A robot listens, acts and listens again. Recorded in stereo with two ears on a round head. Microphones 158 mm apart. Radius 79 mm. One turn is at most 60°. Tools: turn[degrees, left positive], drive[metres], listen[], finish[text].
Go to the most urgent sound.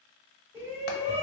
Action: turn[-30]
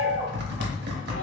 Thought: So it is at 135° right.
Action: turn[-60]
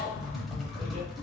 Thought: Nothing new. It was at 75° right.
Action: turn[-60]
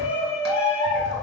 Thought: The shout is now 10° right.
Action: turn[-10]
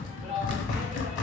Action: drive[1.0]
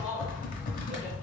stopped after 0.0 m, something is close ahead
Action: finish[Blocked. The shout is further on, straight ahead.]